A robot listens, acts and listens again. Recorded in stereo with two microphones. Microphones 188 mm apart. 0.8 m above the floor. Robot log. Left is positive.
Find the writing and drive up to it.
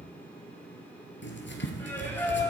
cmd yaw +90
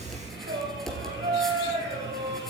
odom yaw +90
cmd fwd 1.0
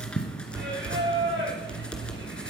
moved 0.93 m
cmd fwd 1.0
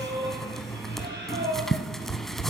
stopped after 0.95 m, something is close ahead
end: Arrived at the writing, straight ahead.